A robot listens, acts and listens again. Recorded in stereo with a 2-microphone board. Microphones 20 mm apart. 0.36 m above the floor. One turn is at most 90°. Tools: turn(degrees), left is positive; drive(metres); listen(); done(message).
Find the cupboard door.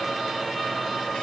listen()
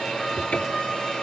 turn(degrees=70)
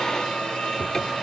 turn(degrees=40)
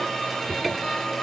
turn(degrees=10)
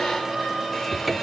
done("Facing the cupboard door.")